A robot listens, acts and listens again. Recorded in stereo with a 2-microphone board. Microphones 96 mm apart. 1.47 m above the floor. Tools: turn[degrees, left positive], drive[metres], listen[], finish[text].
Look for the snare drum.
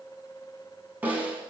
Thought: The snare drum: about 15° right or 165° right.
Action: turn[-15]
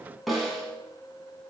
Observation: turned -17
Action: finish[Found it: a snare drum, straight ahead.]